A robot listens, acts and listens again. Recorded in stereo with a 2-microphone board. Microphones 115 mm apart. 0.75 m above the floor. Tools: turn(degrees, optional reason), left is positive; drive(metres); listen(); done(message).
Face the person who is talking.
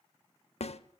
listen()
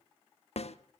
listen()
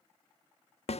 done("I can't make out anyone speaking, only a snare drum.")